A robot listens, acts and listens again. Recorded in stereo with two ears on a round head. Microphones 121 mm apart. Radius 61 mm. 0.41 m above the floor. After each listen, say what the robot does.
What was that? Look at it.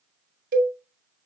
Turn 65° right.
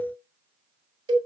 Turn 35° right.
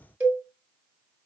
Turn 15° right.
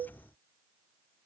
Keep listening.
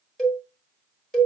Found it: a cowbell, straight ahead, 1 to 2 m away.